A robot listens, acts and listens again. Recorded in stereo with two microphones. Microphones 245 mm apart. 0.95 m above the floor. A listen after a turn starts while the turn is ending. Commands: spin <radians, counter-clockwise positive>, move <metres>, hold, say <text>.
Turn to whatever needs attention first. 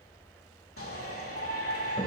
spin 1.05
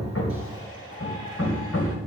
spin 0.96
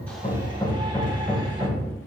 hold
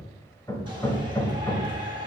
spin -0.35
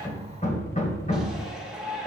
say Found it: a shout, straight ahead.